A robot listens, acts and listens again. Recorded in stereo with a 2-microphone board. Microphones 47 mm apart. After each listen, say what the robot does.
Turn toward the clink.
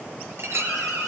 Turn 70° right.
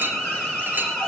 Turn 40° right.
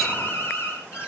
Keep listening.
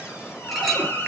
Facing the clink.